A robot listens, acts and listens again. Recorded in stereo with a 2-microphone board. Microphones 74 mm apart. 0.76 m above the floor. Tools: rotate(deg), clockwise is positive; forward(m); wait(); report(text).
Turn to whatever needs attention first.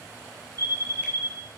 rotate(60)
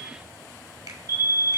rotate(50)
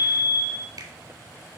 report("Facing the fire alarm.")